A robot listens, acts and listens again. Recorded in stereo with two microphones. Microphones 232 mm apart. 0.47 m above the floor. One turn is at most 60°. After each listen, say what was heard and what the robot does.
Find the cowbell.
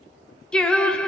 Keep listening.
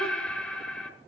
Keep listening.
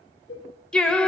The cowbell: about 60° left or 120° left. Turn 60° left.
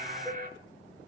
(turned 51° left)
Keep listening.
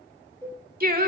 So it is at 10° left. Turn 10° left.
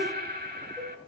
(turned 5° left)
Keep listening.
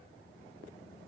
Keep listening.
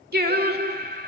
Facing where the cowbell came from. I can't hear it now.